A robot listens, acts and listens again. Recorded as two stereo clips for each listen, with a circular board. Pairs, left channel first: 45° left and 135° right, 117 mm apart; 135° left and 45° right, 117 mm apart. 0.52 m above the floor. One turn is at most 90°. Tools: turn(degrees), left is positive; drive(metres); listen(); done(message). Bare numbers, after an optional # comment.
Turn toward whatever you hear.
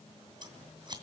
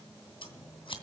# The scissors: 175° left.
turn(90)
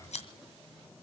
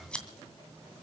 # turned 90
# The scissors is now 55° left.
turn(55)
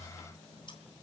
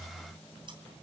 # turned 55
listen()
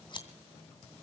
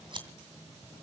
done("Found it: scissors, straight ahead, 2 to 4 m away.")